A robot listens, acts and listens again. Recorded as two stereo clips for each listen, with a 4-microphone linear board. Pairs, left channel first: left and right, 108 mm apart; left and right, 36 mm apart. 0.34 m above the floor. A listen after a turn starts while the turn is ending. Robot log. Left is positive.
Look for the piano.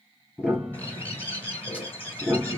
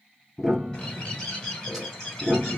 cmd yaw -30
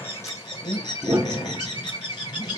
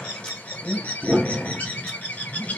note: So it is at 140° right.
cmd yaw -140
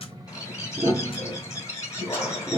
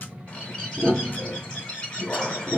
note: The piano is now 45° right.
cmd yaw -45
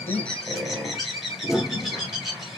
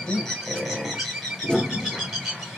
note: The piano is now 10° right.
cmd yaw -10
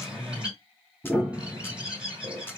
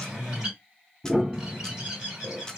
end: Facing the piano, 1 to 2 m away.